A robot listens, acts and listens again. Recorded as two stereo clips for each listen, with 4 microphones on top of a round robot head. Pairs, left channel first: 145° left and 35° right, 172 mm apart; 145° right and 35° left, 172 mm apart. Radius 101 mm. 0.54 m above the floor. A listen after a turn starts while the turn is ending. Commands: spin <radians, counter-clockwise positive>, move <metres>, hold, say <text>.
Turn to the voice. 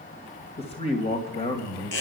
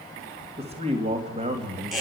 spin 1.57
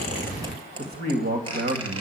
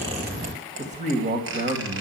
spin -0.17
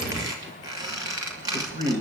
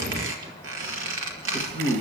say Found it: a man speaking, straight ahead, 2 to 4 m away.